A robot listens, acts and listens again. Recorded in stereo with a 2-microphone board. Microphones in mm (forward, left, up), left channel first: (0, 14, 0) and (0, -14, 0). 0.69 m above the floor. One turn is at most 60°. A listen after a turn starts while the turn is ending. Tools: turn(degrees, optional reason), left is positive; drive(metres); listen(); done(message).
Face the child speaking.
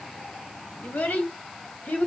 turn(degrees=60, reason="The child speaking: about 65° left or 115° left.")
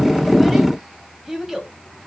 turn(degrees=-10, reason="So it is at 10° right.")
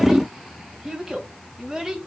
turn(degrees=-15, reason="The child speaking is now 15° right.")
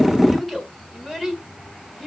done("Found it: a child speaking, straight ahead, 2 to 4 m away.")